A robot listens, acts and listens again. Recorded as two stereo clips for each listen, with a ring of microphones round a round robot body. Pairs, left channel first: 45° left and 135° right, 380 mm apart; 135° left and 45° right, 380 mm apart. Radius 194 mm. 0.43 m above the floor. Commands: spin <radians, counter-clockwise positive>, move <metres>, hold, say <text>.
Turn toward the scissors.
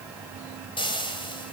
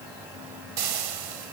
hold
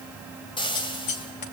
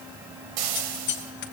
spin 1.31
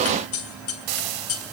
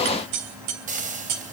say Found it: scissors, straight ahead.